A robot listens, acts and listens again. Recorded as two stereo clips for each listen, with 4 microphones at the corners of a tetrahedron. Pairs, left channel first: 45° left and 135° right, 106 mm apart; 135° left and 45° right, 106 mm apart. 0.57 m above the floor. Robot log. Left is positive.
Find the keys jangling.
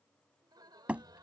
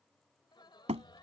cmd idle
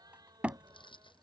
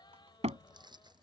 end: Found it: keys jangling, straight ahead.